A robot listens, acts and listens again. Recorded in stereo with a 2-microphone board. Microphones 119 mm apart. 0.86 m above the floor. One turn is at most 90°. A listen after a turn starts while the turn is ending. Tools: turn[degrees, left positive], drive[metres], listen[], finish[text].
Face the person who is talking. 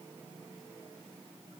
Action: listen[]
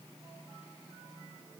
Action: listen[]
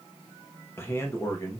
Thought: The man speaking: about 30° left or 150° left.
Action: turn[30]
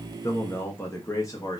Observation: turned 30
Thought: The man speaking: about 30° left or 150° left.
Action: turn[30]
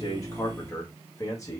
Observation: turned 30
Thought: The man speaking: about 25° left or 155° left.
Action: turn[25]
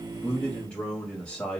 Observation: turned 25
Thought: So it is at 10° left.
Action: turn[10]
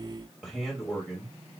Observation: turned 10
Action: finish[Facing the man speaking, 1 to 2 m away.]